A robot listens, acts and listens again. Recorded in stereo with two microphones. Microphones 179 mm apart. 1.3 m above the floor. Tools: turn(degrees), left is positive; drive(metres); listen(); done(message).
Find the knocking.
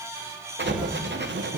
turn(degrees=-35)
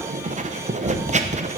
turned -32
turn(degrees=-110)
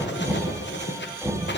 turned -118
done("Found it: knocking, straight ahead.")